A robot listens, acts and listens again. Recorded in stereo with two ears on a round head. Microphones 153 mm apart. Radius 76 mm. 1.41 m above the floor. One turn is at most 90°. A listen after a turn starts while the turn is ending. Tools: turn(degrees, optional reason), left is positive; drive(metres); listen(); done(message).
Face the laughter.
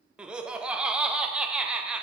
turn(degrees=-30)
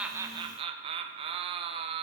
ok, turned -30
turn(degrees=-90, reason="So it is at 145° right.")
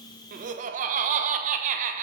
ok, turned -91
turn(degrees=-50, reason="The laughter is now 50° right.")
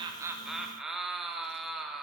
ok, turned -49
done("Found it: laughter, straight ahead, under 1 m away.")